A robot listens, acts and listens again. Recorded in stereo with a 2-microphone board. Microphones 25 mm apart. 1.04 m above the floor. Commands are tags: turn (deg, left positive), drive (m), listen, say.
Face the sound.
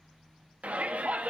<turn deg="-70"/>
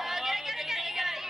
<turn deg="-20"/>
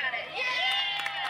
<say>Facing the shout, 2 to 4 m away.</say>